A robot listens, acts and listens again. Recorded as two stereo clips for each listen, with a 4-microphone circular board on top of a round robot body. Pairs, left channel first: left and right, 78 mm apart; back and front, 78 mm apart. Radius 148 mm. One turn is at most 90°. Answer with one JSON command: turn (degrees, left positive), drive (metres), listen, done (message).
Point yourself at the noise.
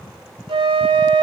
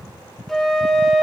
{"turn": -90}
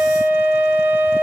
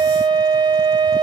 {"turn": -25}
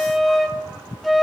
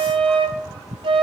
{"done": "Found it: a flute, straight ahead."}